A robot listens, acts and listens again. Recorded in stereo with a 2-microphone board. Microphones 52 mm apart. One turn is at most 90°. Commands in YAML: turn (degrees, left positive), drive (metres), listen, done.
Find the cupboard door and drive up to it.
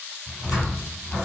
turn: -30
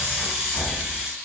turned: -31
turn: 20
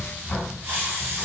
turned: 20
drive: 1.0
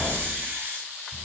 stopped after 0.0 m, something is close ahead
done: "Something is in my way. I am facing the cupboard door but have not reached it."